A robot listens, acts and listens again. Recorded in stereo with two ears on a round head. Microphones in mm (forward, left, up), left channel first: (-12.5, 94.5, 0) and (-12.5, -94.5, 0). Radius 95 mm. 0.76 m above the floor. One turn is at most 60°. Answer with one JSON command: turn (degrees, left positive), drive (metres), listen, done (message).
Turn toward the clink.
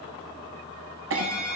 {"turn": -60}
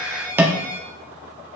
{"turn": -10}
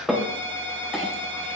{"done": "Facing the clink."}